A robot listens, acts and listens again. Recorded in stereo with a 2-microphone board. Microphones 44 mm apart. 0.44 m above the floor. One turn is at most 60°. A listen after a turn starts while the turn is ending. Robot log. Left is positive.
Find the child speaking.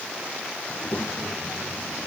note: The child speaking: about 50° left or 130° left.
cmd yaw +50
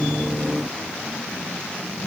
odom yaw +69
note: So it is at 65° left.
cmd yaw +60
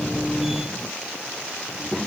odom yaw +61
end: Found it: a child speaking, straight ahead.